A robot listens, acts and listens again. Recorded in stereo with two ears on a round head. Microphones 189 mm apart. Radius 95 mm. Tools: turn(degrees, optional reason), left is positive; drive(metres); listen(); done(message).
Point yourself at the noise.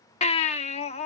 turn(degrees=30, reason="The baby crying: about 30° left or 150° left.")
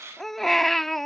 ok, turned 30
done("Found it: a baby crying, straight ahead.")